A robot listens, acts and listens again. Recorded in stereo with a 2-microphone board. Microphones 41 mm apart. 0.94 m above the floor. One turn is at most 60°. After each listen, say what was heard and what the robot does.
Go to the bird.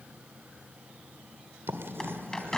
The bird: about 15° left or 165° left. Turn 15° left.
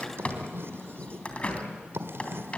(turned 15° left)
So it is at 145° left. Turn 60° left.
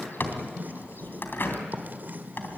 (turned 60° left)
The bird is now 110° left. Turn 60° left.
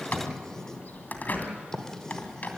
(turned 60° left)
The bird is now 45° left. Turn 45° left.
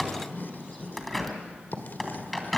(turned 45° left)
Drive 1.0 m forward.
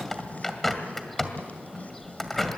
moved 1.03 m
Drive 1.0 m forward.
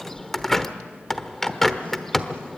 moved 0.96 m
The bird is now 10° left. Turn 10° left.
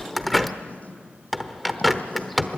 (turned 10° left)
Drive 1.0 m forward.
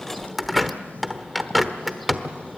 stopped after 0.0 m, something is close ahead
I am next to the bird.